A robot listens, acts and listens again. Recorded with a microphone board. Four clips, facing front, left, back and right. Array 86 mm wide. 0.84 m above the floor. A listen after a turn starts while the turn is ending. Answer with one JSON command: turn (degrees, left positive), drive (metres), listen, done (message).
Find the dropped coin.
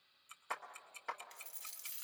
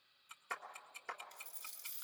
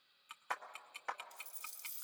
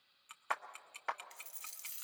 {"turn": -55}
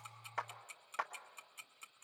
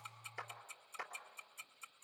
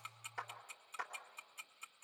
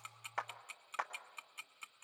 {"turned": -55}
{"done": "Facing where the dropped coin came from. I can't hear it now."}